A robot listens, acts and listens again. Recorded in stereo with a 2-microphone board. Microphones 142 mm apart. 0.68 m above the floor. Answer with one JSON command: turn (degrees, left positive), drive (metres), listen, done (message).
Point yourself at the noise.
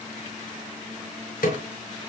{"turn": 90}
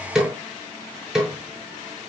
{"done": "Facing the snare drum, over 4 m away."}